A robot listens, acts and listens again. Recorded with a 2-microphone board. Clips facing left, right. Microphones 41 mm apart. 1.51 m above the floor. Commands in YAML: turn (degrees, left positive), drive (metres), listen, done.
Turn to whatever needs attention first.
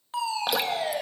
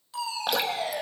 turn: 40
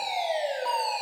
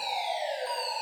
turn: 100
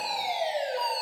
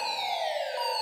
done: "Found it: a fire alarm, straight ahead, over 4 m away."